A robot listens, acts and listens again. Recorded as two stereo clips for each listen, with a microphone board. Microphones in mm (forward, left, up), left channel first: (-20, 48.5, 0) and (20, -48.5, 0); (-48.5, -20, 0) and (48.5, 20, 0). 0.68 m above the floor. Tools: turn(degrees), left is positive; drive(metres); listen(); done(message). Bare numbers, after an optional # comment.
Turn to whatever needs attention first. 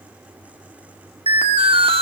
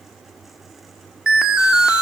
# The alarm: 60° right.
turn(-60)
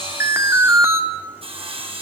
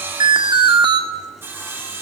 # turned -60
# The alarm is now 10° right.
turn(-10)
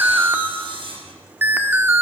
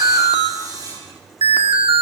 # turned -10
done("Facing the alarm, 1 to 2 m away.")